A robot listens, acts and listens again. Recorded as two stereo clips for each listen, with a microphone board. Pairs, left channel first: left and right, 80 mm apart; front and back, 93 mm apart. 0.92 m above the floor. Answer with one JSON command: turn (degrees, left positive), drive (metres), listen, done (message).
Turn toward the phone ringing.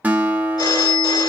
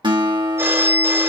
{"turn": 120}
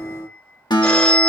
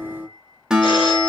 {"turn": 15}
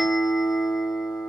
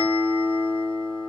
{"listen": true}
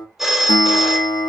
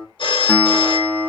{"done": "Found it: a phone ringing, straight ahead, 2 to 4 m away."}